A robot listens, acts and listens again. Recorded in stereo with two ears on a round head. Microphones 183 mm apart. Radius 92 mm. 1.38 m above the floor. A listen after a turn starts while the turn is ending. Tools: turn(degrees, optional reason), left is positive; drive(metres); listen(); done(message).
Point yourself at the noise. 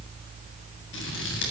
turn(degrees=65, reason="The scissors: about 65° left or 115° left.")
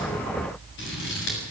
turn(degrees=55, reason="So it is at 55° left.")
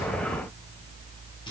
listen()
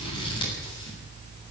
turn(degrees=20, reason="The scissors is now 20° left.")
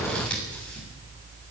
done("Found it: scissors, straight ahead, over 4 m away.")